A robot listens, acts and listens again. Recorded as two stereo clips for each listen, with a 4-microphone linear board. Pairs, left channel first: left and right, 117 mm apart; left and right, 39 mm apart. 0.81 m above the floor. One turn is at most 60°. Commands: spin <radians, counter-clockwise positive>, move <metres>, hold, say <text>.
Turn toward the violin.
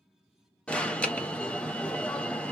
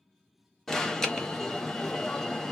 hold
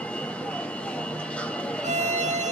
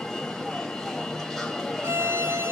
spin -1.05
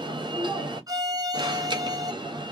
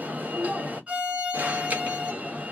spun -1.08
spin -0.61
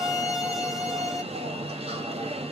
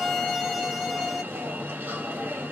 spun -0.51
say Found it: a violin, straight ahead.